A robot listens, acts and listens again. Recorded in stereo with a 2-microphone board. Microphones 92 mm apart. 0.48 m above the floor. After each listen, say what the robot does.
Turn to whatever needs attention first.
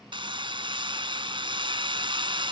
Keep listening.
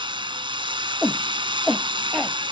Turn 30° left.
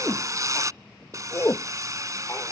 Turn 150° left.
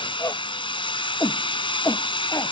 Turn 35° left.
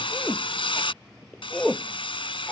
Turn 10° left.
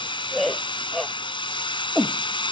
Found it: a shout, straight ahead.